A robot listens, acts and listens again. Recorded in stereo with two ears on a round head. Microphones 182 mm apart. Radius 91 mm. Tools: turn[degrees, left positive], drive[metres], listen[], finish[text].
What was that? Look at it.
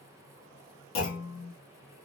Action: turn[90]
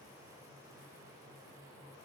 Action: finish[Facing where the clunk came from. I can't hear it now.]